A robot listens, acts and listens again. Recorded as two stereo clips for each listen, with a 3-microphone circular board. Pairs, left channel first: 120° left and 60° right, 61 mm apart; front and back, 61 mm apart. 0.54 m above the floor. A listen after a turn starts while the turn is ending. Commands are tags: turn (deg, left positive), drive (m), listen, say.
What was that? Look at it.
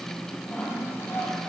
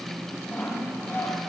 <turn deg="60"/>
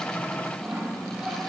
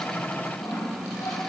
<turn deg="20"/>
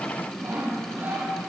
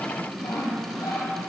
<say>Found it: sawing, straight ahead.</say>